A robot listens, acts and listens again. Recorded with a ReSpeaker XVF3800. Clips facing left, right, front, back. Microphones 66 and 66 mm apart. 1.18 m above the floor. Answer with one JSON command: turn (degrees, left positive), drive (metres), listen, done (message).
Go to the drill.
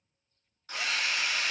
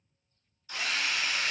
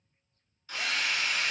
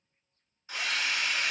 {"turn": 115}
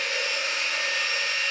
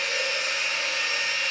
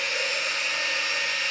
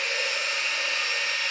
{"turn": -20}
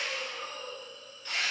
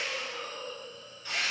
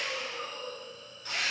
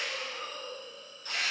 {"drive": 1.0}
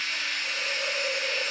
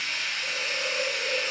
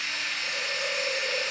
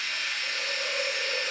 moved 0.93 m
{"turn": -10}
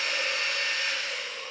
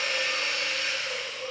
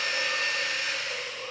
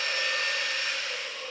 {"drive": 1.0}
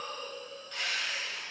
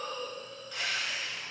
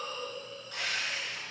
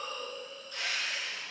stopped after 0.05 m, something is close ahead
{"done": "I am next to the drill."}